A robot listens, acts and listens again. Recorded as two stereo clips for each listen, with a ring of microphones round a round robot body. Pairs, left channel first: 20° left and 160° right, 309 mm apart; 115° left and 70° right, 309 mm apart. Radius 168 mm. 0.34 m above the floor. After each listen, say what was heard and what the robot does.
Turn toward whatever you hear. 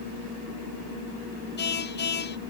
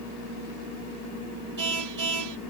The car horn: 35° right. Turn 35° right.
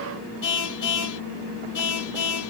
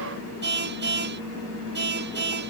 The car horn is now 10° right. Turn 10° right.
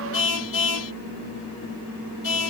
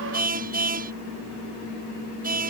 Found it: a car horn, straight ahead.